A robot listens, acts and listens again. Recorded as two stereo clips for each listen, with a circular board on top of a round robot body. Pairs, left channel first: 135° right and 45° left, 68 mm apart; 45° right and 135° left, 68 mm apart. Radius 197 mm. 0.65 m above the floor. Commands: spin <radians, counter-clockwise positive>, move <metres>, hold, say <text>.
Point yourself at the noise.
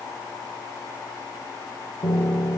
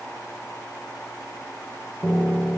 spin -2.27
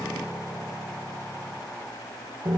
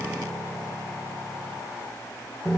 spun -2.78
spin 0.52
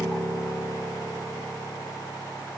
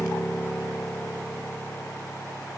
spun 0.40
spin 0.17
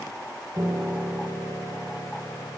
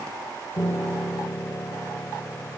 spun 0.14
say Facing the piano.